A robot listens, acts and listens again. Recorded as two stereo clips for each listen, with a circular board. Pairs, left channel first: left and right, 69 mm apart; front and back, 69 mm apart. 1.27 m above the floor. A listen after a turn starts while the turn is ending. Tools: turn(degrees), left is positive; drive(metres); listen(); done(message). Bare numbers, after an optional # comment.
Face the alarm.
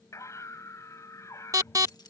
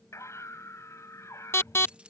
# The alarm: 50° right.
turn(-50)
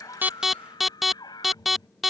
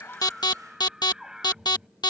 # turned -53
done("Found it: an alarm, straight ahead.")